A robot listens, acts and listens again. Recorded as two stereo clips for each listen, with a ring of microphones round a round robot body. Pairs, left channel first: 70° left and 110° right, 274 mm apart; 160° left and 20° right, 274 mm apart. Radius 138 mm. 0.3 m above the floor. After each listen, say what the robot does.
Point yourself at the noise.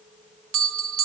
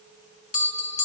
Turn 145° right.
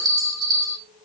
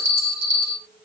Turn 40° right.
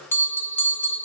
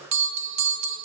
Turn 15° right.
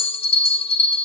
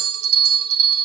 Facing the bell, 1 to 2 m away.